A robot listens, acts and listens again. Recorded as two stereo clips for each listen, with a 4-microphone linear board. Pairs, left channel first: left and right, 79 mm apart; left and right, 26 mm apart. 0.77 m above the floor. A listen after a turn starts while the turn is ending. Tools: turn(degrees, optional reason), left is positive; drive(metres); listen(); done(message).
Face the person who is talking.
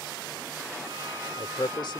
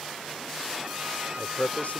turn(degrees=75, reason="The man speaking: about 75° left or 105° left.")
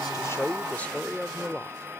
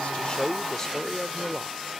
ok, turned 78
turn(degrees=20, reason="So it is at 20° left.")
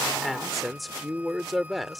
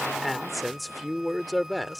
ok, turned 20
done("Found it: a man speaking, straight ahead.")